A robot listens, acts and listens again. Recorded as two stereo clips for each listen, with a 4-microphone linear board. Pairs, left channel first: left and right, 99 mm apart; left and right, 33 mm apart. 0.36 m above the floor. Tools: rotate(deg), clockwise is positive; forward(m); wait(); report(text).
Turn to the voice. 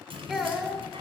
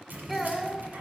rotate(-30)
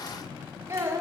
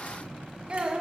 rotate(30)
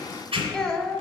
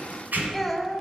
report("Found it: a child speaking, straight ahead.")